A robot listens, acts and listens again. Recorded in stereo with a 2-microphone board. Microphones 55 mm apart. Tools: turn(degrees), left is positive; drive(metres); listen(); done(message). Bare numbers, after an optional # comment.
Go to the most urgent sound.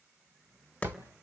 listen()
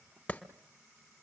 listen()
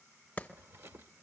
done("I can't make out anything urgent, only a clap and a drawer.")